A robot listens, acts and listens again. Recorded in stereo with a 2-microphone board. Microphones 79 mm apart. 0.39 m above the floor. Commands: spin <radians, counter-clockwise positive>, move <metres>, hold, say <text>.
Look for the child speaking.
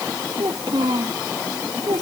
spin -1.57
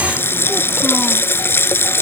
hold
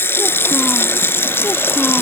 hold
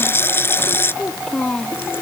spin 0.17
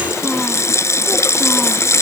hold
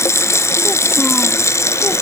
hold
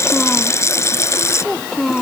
say Found it: a child speaking, straight ahead.